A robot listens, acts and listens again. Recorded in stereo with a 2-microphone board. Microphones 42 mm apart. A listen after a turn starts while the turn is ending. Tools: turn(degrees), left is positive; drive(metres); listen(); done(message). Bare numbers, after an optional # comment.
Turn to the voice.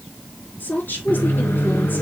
# The woman speaking: about 45° left or 135° left.
turn(45)
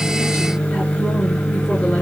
listen()
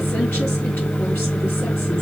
listen()
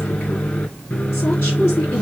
# So it is at 90° left.
turn(90)
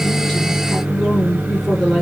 done("Facing the woman speaking, over 4 m away.")